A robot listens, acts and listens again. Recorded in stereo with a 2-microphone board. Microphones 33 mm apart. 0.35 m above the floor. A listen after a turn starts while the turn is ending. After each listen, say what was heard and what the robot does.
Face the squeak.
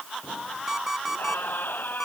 The squeak: about 70° left or 110° left. Turn 70° left.
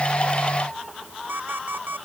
Keep listening.
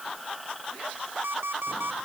Facing the squeak.